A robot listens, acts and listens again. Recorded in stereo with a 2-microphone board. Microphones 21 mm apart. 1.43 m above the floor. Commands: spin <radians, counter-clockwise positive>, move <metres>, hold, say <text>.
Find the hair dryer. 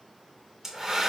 spin -0.44
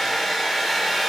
say Found it: a hair dryer, straight ahead.